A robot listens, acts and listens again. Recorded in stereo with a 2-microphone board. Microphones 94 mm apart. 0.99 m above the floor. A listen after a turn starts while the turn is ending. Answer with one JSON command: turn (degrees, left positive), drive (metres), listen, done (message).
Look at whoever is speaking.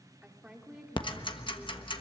{"turn": -30}
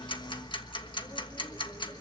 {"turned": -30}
{"listen": true}
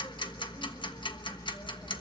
{"listen": true}
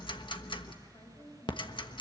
{"turn": 40}
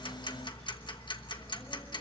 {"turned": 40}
{"listen": true}
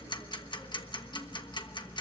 {"listen": true}
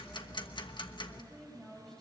{"done": "Facing the woman speaking, over 4 m away."}